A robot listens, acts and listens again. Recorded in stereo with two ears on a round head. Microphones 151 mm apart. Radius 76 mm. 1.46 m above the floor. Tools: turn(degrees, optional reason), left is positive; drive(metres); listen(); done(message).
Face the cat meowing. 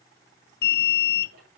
listen()
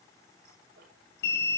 listen()
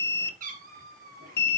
turn(degrees=-55, reason="The cat meowing: about 55° right or 125° right.")
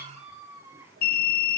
turn(degrees=-15, reason="So it is at 15° right.")
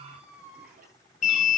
done("Facing the cat meowing, 2 to 4 m away.")